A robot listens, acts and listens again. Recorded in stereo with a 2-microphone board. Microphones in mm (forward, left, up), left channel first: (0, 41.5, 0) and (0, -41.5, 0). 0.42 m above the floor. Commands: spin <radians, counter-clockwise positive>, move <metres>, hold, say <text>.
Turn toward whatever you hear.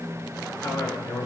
spin 0.70
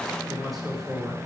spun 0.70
say Found it: a man speaking, straight ahead.